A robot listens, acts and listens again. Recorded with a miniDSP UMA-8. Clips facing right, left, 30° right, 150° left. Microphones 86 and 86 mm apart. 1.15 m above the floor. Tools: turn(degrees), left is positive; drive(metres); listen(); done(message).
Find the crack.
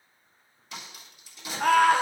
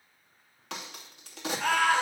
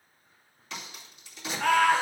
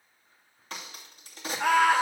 turn(degrees=100)
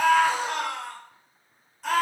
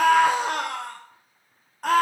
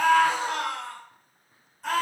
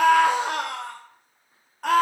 done("I heard a crack from this way, but can't make it out now.")